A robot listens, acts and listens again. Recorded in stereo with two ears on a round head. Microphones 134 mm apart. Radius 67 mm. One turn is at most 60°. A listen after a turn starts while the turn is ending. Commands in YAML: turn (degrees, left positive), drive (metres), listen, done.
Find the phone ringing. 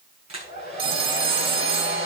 turn: -35
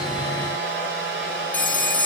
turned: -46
turn: 10
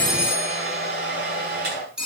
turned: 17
done: "Found it: a phone ringing, straight ahead."